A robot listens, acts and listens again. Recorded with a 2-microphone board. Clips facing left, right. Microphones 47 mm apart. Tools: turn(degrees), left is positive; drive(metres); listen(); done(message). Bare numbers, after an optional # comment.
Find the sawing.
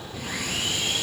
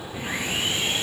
# The sawing: about 25° right or 155° right.
turn(-25)
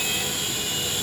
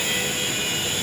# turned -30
# So it is at 125° right.
turn(-125)
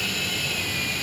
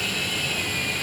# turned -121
done("Found it: sawing, straight ahead.")